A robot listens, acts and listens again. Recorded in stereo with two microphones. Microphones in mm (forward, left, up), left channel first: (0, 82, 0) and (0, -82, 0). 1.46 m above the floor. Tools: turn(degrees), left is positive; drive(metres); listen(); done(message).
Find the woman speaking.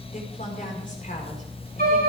turn(degrees=50)
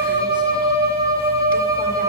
listen()
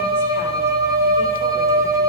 listen()
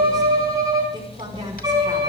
turn(degrees=-25)
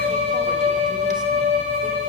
listen()
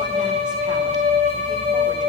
listen()
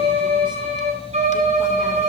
done("Facing where the woman speaking came from. I can't hear it now.")